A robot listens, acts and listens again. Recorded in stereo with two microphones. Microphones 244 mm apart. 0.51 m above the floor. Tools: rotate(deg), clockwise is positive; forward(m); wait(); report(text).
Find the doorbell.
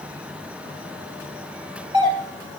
rotate(20)
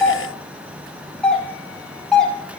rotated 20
report("Facing the doorbell.")